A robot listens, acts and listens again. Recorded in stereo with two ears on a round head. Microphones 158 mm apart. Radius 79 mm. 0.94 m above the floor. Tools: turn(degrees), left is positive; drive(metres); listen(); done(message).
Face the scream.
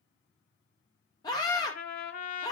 turn(degrees=20)
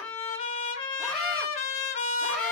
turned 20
listen()
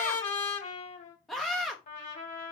done("Facing the scream, under 1 m away.")